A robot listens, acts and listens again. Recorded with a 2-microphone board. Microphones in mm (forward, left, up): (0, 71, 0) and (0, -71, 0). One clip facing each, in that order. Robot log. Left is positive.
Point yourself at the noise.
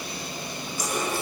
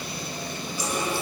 note: The running tap: about 45° left or 135° left.
cmd yaw +45
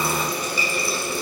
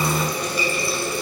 end: Facing the running tap, over 4 m away.